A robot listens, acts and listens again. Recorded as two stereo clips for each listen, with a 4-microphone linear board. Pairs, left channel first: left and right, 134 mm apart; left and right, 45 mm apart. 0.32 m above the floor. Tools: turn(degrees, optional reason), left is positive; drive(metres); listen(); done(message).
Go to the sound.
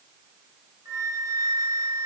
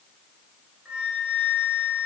turn(degrees=-25, reason="The flute: about 25° right or 155° right.")
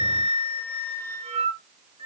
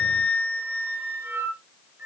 turn(degrees=-130, reason="So it is at 130° right.")
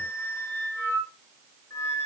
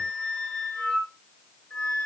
turn(degrees=20, reason="The flute is now 20° left.")
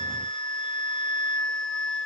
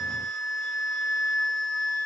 drive(metres=1.0)
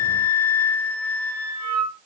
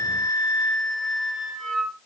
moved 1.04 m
turn(degrees=10, reason="The flute is now 10° left.")
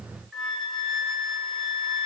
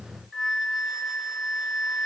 drive(metres=1.0)
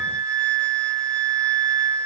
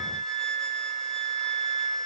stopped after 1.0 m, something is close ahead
turn(degrees=10, reason="The flute is now 10° left.")
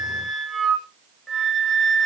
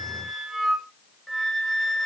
done("Arrived at the flute, straight ahead.")